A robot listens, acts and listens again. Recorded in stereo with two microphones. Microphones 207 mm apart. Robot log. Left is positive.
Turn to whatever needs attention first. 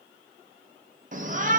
note: The shout: about 40° right or 140° right.
cmd yaw -40
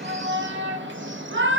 note: So it is at 95° right.
cmd yaw -95
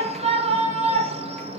note: The shout is now 35° right.
cmd yaw -35
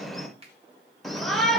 end: Facing the shout.